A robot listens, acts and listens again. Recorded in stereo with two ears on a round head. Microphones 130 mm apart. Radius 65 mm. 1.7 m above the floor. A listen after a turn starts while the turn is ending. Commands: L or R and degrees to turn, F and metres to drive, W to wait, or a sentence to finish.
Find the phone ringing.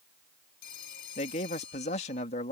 L90
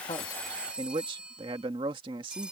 Facing the phone ringing.